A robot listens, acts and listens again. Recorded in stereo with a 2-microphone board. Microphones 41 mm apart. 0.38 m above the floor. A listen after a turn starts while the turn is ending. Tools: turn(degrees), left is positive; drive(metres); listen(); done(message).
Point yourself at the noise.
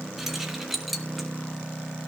turn(degrees=-30)
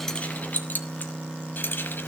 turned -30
turn(degrees=45)
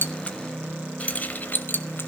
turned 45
turn(degrees=45)
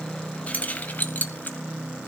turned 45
turn(degrees=35)
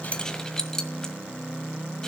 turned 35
turn(degrees=10)
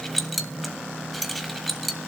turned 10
done("Facing the keys jangling, 1 to 2 m away.")